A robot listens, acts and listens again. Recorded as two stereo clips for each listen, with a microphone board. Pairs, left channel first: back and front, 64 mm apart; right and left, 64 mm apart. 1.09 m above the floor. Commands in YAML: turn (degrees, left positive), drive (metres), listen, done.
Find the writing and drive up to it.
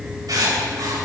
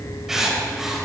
drive: 1.0
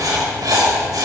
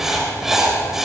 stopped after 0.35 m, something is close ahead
done: "Blocked. The writing is further on, straight ahead."